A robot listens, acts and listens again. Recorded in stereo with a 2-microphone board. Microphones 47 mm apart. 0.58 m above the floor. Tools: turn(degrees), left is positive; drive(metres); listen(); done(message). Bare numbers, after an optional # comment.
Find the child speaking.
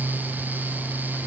listen()
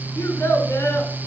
# The child speaking: about 70° left or 110° left.
turn(70)
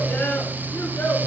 # So it is at 50° left.
turn(50)
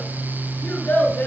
# The child speaking is now 40° left.
turn(40)
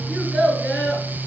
done("Facing the child speaking, over 4 m away.")